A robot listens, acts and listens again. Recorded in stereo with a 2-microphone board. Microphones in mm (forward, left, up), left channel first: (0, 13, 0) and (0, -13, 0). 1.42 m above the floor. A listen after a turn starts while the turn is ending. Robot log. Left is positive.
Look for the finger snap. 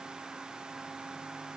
cmd idle
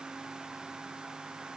cmd idle
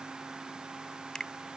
note: The finger snap: about 25° left or 155° left.
cmd yaw +25
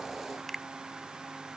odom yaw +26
end: Facing the finger snap.